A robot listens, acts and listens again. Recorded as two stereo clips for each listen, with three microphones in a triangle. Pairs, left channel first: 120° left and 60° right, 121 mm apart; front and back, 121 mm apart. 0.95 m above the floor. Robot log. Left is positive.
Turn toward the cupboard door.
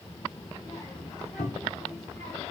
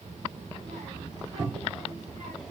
note: The cupboard door: 140° left.
cmd yaw +140
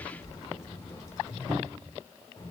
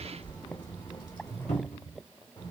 note: The cupboard door is now 10° left.
cmd yaw +10
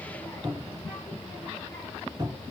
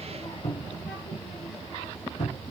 end: Found it: a cupboard door, straight ahead, 2 to 4 m away.